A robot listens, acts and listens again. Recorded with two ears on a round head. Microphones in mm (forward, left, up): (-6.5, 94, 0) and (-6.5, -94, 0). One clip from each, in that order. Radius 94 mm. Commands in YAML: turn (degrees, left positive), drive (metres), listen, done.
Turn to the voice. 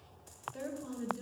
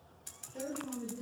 turn: 90
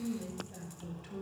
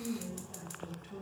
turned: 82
turn: 10
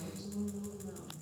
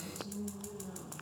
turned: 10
done: "Found it: a woman speaking, straight ahead."